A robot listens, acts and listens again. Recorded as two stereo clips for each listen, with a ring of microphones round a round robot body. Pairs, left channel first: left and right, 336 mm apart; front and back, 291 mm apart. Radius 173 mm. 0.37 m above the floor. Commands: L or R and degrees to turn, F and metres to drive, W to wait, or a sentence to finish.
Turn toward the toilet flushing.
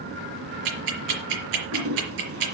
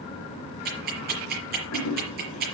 R40
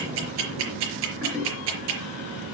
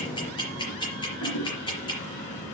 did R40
Facing the toilet flushing, over 4 m away.